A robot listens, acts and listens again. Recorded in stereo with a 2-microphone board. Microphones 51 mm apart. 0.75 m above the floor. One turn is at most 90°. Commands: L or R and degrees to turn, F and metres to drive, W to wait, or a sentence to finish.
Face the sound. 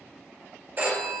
R35
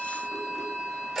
Found it: a phone ringing, straight ahead.